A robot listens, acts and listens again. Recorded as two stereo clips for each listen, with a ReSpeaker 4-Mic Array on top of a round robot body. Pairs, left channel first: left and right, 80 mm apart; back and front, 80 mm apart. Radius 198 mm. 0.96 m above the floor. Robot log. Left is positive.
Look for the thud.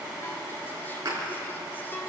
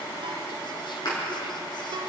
note: The thud: 140° right.
cmd yaw -140
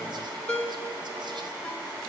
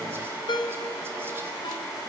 end: Facing where the thud came from. I can't hear it now.